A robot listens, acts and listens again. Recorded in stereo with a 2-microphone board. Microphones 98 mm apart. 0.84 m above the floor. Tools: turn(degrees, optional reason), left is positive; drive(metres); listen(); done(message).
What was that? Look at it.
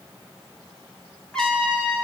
turn(degrees=30)
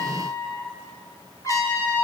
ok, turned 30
turn(degrees=145, reason="So it is at 145° left.")
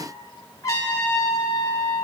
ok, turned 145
turn(degrees=35, reason="The trumpet is now 35° left.")
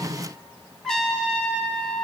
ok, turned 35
done("Found it: a trumpet, straight ahead.")